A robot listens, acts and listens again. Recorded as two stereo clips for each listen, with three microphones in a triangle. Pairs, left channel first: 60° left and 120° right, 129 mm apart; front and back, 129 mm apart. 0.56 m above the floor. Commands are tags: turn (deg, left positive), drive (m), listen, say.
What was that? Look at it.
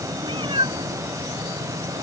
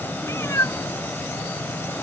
<turn deg="-65"/>
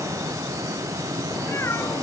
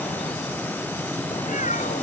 <turn deg="-10"/>
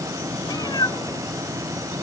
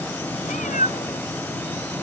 <say>Found it: a cat meowing, straight ahead.</say>